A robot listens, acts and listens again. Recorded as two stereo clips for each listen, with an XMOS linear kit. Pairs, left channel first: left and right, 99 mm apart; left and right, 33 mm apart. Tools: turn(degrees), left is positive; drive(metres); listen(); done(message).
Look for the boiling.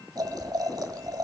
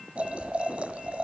turn(degrees=-40)
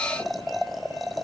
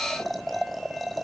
done("Found it: boiling, straight ahead.")